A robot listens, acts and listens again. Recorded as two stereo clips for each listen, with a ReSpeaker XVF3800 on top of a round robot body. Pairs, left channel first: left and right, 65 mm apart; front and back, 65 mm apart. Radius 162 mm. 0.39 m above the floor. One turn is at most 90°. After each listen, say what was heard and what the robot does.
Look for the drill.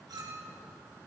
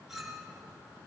Keep listening.
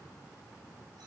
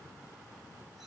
Keep listening.
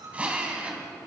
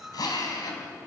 The drill: 20° right. Turn 20° right.
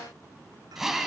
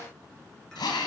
Facing the drill.